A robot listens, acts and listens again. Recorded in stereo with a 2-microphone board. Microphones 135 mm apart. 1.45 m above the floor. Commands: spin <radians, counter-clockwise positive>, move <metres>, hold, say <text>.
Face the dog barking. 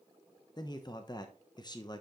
hold
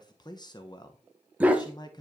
spin -0.52
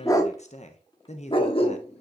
spin 0.79
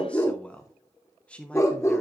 spin 0.35
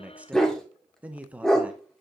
say Found it: a dog barking, straight ahead.